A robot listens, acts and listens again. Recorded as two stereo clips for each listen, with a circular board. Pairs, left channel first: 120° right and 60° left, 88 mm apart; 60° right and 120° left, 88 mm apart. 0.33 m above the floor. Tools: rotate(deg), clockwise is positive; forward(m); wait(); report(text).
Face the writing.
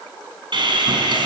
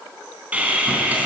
wait()
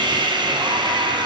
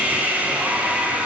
wait()
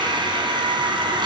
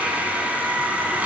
report("I can't make out writing, only sawing.")